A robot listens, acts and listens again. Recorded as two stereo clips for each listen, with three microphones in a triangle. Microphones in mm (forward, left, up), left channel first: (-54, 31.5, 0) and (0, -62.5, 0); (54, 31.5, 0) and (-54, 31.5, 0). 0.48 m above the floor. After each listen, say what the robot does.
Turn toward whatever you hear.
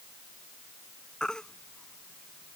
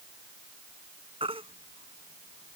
Turn 155° right.
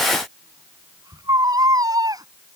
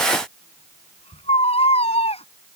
Turn 10° right.
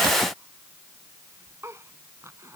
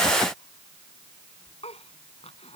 Found it: a baby crying, straight ahead.